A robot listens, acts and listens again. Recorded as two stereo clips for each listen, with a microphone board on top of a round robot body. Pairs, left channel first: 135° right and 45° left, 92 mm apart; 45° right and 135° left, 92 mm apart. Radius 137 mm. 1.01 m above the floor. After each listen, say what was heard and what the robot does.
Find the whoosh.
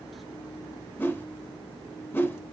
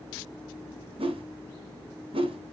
The whoosh: 155° left. Turn 155° left.
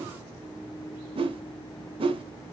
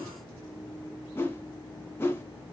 The whoosh is now 25° left. Turn 25° left.
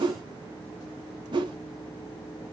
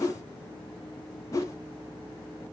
The whoosh is now 10° left. Turn 10° left.
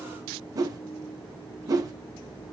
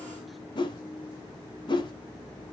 Facing the whoosh.